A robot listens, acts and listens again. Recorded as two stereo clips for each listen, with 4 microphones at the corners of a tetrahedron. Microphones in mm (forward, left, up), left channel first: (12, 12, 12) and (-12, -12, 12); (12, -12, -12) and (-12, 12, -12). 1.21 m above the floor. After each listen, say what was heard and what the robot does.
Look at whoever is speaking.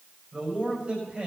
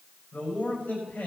The man speaking: 85° right. Turn 85° right.
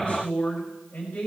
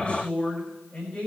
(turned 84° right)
Found it: a man speaking, straight ahead.